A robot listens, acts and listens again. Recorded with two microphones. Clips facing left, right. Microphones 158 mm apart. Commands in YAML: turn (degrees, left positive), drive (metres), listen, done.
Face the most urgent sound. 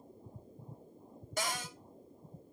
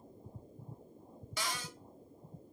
listen: true
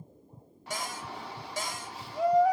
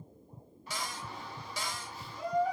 turn: 90
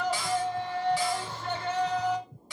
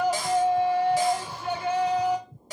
turn: -10
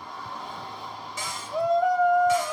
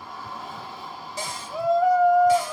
done: "Facing the shout, 1 to 2 m away."